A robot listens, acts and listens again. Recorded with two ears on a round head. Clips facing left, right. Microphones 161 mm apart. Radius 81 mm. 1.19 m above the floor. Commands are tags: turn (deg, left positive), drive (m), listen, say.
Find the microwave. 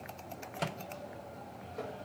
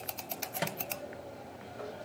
<turn deg="-15"/>
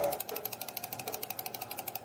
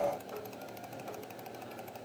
<listen/>
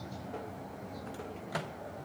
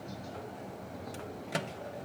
<turn deg="-150"/>
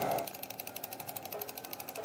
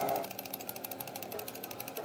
<listen/>
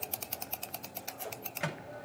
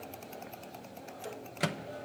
<turn deg="-45"/>
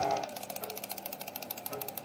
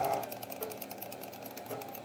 <listen/>
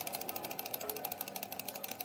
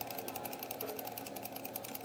<listen/>
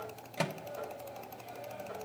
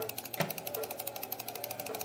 <say>Facing the microwave, 1 to 2 m away.</say>